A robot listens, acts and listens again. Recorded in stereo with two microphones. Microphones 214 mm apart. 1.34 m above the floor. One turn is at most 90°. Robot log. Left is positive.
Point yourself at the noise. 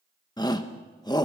note: The shout: about 20° left or 160° left.
cmd yaw +20
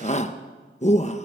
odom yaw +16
note: So it is at 145° left.
cmd yaw +90
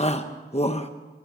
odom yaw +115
note: The shout is now 30° left.
cmd yaw +30
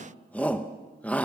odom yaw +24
end: Facing the shout, under 1 m away.